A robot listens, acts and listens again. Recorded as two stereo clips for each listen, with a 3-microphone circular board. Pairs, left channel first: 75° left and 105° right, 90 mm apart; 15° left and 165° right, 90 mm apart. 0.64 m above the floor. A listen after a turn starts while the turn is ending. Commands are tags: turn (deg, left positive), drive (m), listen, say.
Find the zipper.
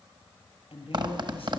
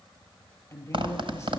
<turn deg="-140"/>
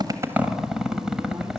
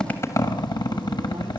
<turn deg="-20"/>
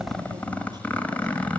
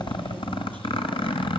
<say>Found it: a zipper, straight ahead, 1 to 2 m away.</say>